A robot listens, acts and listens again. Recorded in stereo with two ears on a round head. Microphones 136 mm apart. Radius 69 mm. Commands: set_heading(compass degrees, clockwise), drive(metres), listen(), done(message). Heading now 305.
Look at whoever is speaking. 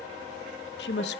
set_heading(215)
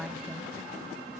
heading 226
done("Facing the woman speaking, 1 to 2 m away.")